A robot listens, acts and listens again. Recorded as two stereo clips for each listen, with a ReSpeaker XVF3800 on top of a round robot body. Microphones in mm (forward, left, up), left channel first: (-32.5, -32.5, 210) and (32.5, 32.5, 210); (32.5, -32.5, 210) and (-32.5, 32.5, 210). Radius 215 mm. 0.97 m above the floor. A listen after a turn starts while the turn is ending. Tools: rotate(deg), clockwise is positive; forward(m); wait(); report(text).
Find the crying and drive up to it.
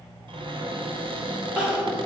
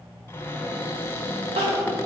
rotate(-125)
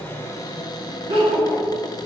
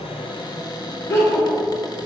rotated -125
rotate(-15)
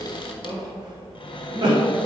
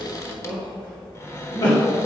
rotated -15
forward(1.0)
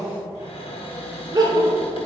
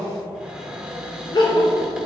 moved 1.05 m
forward(1.0)
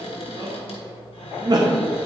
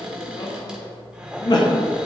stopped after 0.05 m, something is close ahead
report("Arrived at the crying, straight ahead.")